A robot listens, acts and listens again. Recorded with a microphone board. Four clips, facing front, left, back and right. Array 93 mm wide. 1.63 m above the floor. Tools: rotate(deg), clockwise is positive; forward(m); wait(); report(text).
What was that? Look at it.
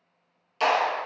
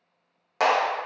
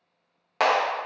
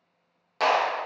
rotate(-165)
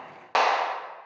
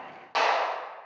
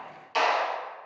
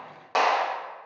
rotate(10)
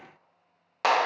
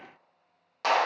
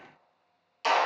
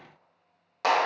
report("Facing the clap, under 1 m away.")